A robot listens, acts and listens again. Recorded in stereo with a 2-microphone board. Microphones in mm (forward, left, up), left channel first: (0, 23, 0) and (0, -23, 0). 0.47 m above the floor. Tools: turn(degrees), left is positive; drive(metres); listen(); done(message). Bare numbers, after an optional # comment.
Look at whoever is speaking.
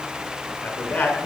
# The man speaking: about 30° left or 150° left.
turn(30)
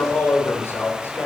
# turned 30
# So it is at 110° left.
turn(110)
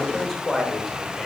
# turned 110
# The man speaking is now 10° left.
turn(10)
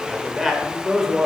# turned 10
done("Found it: a man speaking, straight ahead, 1 to 2 m away.")